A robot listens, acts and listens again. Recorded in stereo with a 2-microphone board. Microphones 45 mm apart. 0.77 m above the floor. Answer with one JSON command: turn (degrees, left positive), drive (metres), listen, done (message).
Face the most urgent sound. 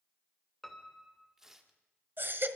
{"turn": -55}
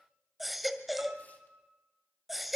{"done": "Facing the baby crying."}